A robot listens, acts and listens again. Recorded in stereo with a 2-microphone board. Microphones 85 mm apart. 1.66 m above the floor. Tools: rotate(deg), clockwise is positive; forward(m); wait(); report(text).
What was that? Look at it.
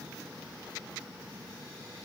wait()
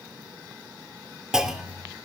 rotate(30)
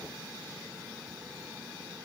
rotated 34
wait()
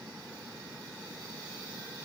report("I heard a clunk, but can't make it out now. It was about 25° left or 140° right.")